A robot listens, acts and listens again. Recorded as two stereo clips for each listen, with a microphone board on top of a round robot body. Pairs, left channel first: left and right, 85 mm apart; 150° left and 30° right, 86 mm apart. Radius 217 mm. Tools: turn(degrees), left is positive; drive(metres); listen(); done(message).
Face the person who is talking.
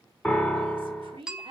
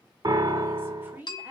turn(degrees=-100)
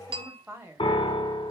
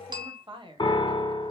turn(degrees=-30)
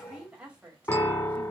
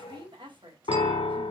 turn(degrees=-15)
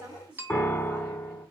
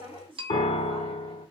turn(degrees=-15)
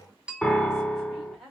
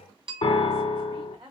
done("Found it: a woman speaking, straight ahead, 1 to 2 m away.")